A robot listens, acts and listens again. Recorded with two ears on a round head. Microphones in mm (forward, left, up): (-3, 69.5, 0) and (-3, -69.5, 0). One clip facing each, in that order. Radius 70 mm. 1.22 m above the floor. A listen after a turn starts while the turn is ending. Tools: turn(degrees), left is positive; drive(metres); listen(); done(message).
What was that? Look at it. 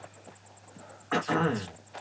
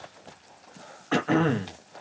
turn(degrees=-35)
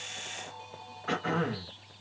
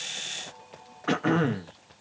turn(degrees=-105)
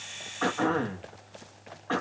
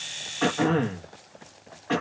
turn(degrees=-25)
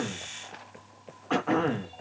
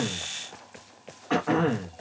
done("Facing the throat clearing.")